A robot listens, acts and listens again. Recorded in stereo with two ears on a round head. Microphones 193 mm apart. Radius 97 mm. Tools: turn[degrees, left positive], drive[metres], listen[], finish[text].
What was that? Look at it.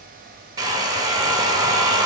Thought: The hair dryer: about 15° right or 165° right.
Action: turn[-15]
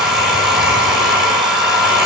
Action: finish[Found it: a hair dryer, straight ahead, 1 to 2 m away.]